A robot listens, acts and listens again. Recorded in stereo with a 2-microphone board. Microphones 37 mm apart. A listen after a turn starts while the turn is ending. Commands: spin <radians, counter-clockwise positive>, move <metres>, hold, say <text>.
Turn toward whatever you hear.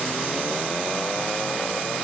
hold
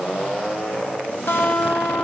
spin 1.57
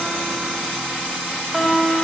say Found it: a guitar, straight ahead.